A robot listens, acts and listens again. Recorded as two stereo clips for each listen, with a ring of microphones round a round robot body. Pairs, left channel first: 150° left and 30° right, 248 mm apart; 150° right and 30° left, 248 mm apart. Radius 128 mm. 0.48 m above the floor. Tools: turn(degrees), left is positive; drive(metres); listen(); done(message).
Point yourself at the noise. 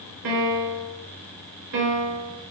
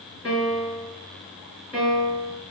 turn(degrees=-60)
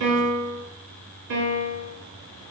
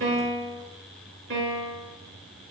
turn(degrees=-15)
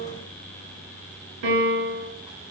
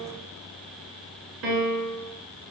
done("Facing the piano.")